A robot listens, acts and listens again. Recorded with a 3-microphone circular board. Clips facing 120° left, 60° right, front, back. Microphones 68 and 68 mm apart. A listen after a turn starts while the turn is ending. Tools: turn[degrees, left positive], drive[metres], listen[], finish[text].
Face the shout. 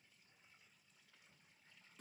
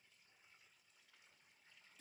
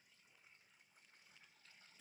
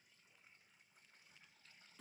Action: listen[]
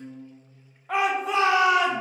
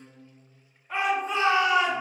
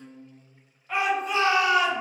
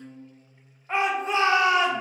Thought: The shout: 120° left.
Action: turn[120]
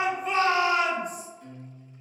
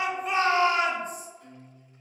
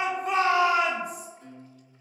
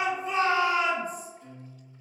Action: finish[Found it: a shout, straight ahead, under 1 m away.]